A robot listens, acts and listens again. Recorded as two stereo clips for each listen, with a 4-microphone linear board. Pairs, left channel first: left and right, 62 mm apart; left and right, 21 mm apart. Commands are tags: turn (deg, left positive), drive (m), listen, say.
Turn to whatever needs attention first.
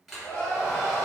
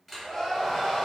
<turn deg="25"/>
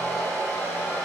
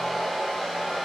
<listen/>
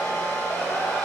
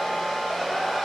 <listen/>
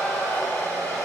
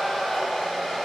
<say>I heard crying, but can't make it out now. It was about straight ahead or 130° left.</say>